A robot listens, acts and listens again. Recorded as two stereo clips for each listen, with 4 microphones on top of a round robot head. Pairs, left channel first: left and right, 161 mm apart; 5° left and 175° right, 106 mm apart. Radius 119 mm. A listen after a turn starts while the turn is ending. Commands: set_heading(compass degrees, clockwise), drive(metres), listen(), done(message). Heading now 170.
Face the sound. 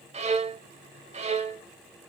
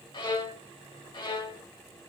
set_heading(215)
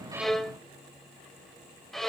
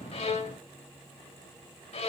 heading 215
done("Facing the violin.")